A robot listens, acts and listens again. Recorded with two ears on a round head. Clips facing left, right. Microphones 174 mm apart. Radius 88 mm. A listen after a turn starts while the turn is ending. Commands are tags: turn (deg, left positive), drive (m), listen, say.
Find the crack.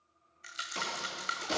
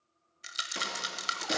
<turn deg="-20"/>
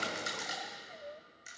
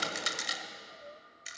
<listen/>
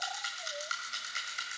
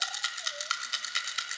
<say>I heard a crack, but can't make it out now. It was about straight ahead or 140° right.</say>